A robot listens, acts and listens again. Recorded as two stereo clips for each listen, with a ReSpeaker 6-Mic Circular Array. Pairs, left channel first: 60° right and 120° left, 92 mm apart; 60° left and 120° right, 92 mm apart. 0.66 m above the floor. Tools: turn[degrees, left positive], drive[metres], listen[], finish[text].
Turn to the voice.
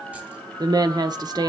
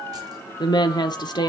Thought: The woman speaking: 90° left.
Action: turn[90]
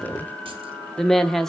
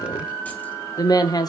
Thought: The woman speaking is now 25° left.
Action: turn[25]
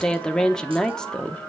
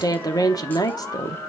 Thought: The woman speaking is now 20° left.
Action: turn[20]
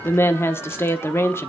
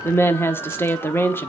Action: finish[Found it: a woman speaking, straight ahead.]